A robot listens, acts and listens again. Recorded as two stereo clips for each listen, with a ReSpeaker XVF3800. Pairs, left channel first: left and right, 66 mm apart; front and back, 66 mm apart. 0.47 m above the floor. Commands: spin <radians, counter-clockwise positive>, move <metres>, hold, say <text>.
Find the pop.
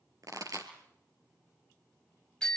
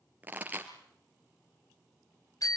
spin -2.01
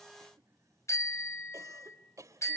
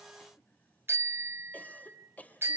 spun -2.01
say I heard a pop from this way, but can't make it out now.